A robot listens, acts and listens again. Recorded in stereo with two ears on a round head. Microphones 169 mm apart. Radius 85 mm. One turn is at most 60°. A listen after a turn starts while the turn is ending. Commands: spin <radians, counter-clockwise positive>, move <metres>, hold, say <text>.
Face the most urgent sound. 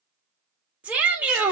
spin -0.52
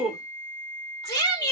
spin 0.44
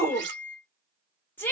spin 0.26
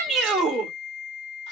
say Found it: a shout, straight ahead, 1 to 2 m away.